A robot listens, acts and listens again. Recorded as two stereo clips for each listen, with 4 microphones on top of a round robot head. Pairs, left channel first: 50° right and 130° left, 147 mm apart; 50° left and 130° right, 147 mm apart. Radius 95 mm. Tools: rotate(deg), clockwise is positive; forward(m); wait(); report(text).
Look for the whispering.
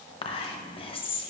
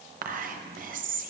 rotate(105)
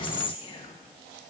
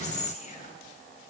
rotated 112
rotate(-10)
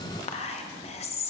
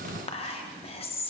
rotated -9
report("Facing the whispering.")